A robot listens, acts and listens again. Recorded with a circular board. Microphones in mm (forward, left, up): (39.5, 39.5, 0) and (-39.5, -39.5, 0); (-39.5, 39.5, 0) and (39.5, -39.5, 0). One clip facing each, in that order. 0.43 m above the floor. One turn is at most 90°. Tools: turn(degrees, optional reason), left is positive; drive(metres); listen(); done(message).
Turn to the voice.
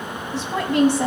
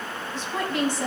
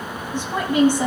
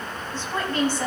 turn(degrees=60, reason="The woman speaking: 60° left.")
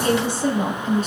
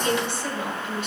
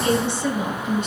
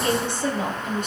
done("Facing the woman speaking, 2 to 4 m away.")